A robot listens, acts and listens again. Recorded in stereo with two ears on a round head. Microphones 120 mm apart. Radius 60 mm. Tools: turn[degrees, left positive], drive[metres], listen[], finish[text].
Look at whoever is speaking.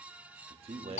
Thought: The man speaking: about 45° right or 135° right.
Action: turn[-45]
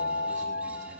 Action: listen[]
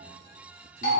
Action: listen[]
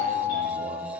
Action: finish[I heard a man speaking, but can't make it out now. It was about straight ahead or 90° right.]